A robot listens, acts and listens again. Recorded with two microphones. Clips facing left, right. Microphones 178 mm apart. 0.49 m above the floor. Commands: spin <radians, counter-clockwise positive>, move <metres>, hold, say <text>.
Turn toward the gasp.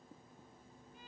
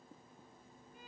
hold
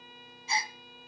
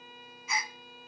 spin 0.52
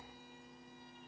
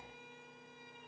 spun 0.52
hold
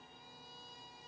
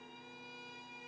say I heard a gasp, but can't make it out now. It was about straight ahead or 120° left.